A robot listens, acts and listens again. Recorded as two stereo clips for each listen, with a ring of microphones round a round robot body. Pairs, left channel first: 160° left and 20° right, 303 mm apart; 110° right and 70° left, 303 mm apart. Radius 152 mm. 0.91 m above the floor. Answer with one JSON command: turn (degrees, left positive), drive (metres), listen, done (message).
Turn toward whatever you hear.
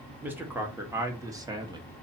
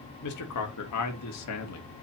{"turn": -95}
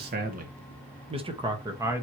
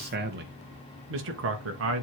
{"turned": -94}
{"turn": 55}
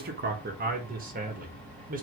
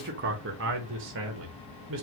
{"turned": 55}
{"turn": 30}
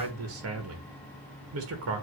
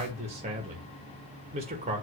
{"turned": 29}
{"done": "Facing the man speaking."}